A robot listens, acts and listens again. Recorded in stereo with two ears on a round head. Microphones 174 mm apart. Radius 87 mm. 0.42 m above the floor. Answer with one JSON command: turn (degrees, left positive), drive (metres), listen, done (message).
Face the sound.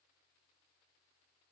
{"listen": true}
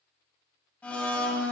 {"turn": 30}
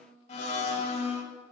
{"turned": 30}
{"turn": 145}
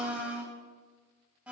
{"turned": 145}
{"done": "Facing the blender."}